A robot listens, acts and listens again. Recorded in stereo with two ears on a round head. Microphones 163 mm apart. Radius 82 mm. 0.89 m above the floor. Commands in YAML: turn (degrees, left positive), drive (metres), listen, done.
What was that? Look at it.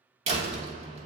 turn: -35
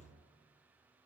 listen: true
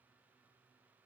done: "I heard a door slam, but can't make it out now. It was about straight ahead or 110° right."